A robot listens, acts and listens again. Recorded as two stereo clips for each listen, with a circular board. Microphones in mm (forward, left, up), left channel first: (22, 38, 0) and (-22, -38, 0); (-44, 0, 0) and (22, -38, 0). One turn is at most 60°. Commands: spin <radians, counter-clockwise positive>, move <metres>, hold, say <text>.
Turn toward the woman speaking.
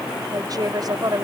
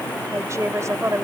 spin -1.05
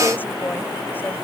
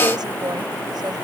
spin -0.26
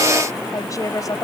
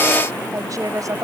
spin 0.17
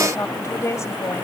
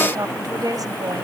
say Facing the woman speaking.